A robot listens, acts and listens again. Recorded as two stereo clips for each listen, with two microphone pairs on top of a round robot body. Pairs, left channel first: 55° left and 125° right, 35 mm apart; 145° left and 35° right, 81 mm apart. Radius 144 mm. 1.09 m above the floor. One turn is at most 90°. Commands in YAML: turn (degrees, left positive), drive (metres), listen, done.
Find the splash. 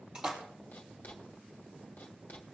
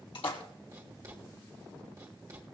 turn: 90
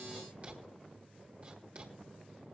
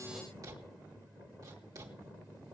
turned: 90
turn: 80
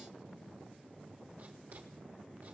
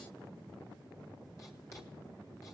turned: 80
done: "I heard a splash from this way, but can't make it out now."